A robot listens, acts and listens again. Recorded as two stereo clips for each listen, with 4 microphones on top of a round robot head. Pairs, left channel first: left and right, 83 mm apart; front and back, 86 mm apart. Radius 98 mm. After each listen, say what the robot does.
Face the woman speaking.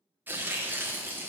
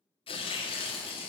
Keep listening.
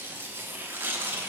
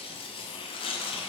Keep listening.
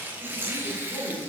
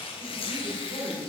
Turn 155° right.
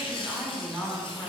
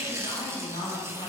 Found it: a woman speaking, straight ahead.